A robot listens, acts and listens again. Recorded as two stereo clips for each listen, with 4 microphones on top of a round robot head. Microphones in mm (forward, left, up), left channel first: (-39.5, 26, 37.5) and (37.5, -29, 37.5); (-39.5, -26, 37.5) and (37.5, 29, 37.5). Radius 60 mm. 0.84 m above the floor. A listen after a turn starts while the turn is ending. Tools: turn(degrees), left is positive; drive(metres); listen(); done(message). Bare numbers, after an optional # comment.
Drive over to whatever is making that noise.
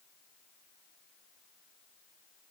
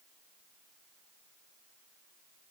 listen()
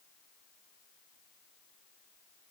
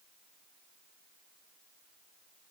listen()
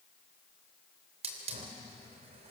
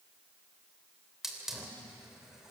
# The hiss: 50° right.
turn(-50)
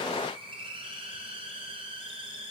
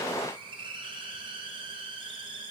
drive(1.0)
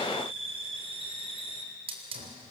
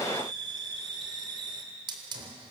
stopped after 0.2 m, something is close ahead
# The hiss is now 10° right.
turn(-10)
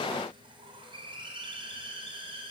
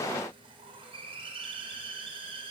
done("Blocked. The hiss is further on, straight ahead.")